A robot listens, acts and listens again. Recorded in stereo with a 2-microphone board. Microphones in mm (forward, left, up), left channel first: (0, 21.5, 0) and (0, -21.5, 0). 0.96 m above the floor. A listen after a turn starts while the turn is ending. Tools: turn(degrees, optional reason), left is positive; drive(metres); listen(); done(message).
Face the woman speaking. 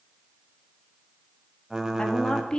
turn(degrees=20, reason="The woman speaking: about 20° left or 160° left.")
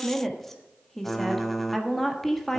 done("Facing the woman speaking.")